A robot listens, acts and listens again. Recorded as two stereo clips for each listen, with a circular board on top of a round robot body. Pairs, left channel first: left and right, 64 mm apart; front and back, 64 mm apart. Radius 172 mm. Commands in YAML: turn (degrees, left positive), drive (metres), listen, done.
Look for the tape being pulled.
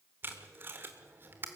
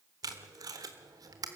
turn: -150
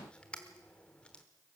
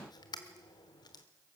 turn: 15
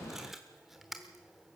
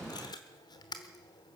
done: "Facing the tape being pulled."